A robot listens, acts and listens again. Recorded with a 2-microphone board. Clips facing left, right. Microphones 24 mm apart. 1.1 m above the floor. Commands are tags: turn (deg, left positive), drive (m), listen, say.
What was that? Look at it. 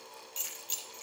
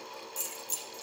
<turn deg="30"/>
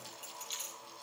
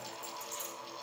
<turn deg="120"/>
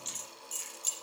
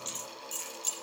<say>Found it: keys jangling, straight ahead, over 4 m away.</say>